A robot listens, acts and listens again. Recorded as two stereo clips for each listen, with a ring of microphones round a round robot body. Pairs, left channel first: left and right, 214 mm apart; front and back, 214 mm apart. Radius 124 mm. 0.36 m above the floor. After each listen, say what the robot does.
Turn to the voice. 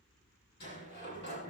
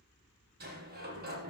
Keep listening.
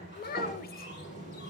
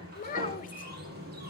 Turn 50° left.
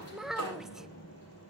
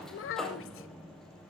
Found it: a child speaking, straight ahead, under 1 m away.